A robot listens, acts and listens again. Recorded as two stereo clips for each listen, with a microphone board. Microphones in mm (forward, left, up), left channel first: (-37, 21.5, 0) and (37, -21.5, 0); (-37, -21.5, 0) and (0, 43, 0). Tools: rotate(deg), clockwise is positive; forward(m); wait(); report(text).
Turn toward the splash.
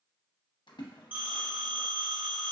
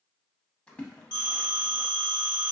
rotate(-165)
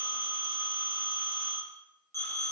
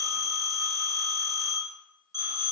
report("Facing where the splash came from. I can't hear it now.")